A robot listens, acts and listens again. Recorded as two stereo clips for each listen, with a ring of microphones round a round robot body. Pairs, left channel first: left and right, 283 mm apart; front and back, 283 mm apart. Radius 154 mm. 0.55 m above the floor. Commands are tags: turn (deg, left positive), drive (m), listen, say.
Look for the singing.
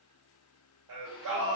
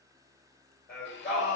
<turn deg="-90"/>
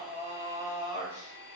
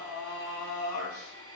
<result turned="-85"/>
<turn deg="-15"/>
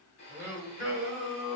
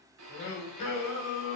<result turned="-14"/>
<turn deg="-10"/>
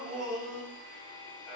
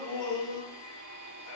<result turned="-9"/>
<say>Facing the singing.</say>